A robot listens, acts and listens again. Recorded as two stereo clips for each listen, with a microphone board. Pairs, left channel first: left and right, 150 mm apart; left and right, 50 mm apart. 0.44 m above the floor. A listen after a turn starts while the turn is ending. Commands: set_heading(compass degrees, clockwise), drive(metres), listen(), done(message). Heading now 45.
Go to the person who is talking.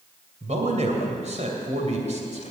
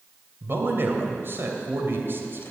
set_heading(95)
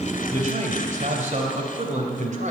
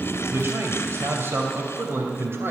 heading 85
set_heading(160)
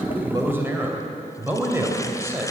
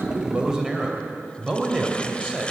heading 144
set_heading(159)
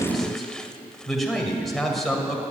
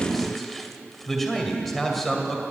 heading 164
drive(1.0)
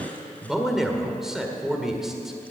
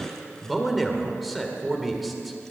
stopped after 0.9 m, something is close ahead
done("Arrived at the man speaking, straight ahead.")